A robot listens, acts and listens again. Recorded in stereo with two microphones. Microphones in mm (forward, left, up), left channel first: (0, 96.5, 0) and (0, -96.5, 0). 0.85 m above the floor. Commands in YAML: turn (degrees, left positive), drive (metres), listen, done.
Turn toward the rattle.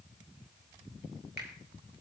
listen: true
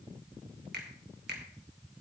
listen: true
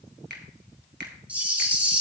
turn: -30
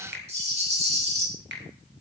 turn: -140
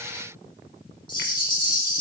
turn: 25
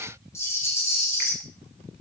turn: 15
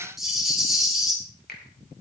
done: "Found it: a rattle, straight ahead."